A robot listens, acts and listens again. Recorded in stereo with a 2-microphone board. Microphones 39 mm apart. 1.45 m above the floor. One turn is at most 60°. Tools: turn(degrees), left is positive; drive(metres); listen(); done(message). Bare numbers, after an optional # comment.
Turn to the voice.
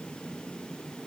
listen()
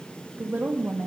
# The woman speaking: about 60° right or 120° right.
turn(-60)
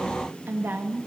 # So it is at 60° right.
turn(-60)
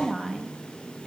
done("Facing the woman speaking.")